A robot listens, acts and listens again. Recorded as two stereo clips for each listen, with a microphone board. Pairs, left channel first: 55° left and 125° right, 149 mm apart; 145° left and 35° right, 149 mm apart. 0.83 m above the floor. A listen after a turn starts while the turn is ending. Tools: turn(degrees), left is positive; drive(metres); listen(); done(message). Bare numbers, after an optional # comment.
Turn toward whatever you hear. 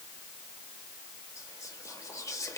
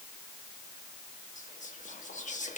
# The whispering: 120° left.
turn(120)
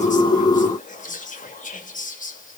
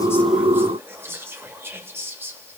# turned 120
# The whispering is now 40° left.
turn(40)
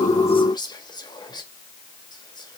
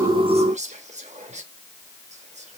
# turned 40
done("Facing the whispering.")